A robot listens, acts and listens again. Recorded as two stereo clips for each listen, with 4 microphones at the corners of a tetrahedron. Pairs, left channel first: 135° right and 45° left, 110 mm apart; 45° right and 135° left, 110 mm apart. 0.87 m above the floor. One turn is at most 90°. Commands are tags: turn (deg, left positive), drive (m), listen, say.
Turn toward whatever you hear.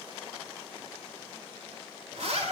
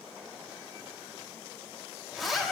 <turn deg="45"/>
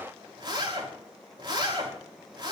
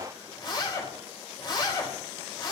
<say>Facing the zipper, over 4 m away.</say>